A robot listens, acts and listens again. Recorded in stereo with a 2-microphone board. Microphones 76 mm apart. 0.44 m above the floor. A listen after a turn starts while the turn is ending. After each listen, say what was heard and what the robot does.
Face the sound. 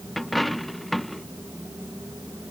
Turn 30° left.
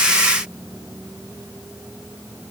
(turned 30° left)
Keep listening.
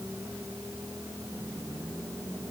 I heard a dropped coin, but can't make it out now. It was about 30° right or 150° left.